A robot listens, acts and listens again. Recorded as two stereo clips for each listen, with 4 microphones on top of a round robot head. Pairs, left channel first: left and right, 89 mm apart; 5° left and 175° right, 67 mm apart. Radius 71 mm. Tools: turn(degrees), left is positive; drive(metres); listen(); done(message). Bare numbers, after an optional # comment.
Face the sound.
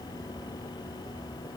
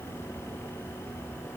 listen()
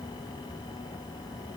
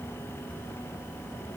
listen()
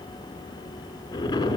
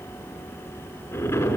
# The explosion: 45° left.
turn(45)
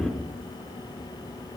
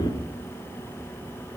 done("Found it: an explosion, straight ahead.")